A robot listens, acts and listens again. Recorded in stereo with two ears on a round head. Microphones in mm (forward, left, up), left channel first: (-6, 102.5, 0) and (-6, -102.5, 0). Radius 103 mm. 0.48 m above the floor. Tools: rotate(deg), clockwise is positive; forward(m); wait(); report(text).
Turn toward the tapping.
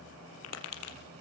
rotate(-90)
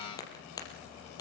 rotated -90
rotate(-15)
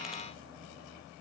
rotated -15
wait()
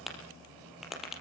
report("Facing the tapping.")